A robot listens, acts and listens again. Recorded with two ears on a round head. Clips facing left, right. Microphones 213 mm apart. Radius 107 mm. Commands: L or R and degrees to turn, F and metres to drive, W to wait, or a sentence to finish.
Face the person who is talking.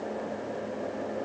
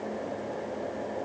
W
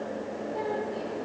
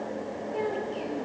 R45
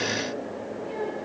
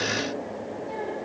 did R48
L15
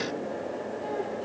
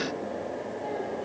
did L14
W
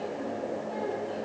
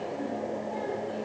W
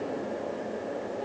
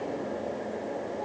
Facing where the child speaking came from. I can't hear it now.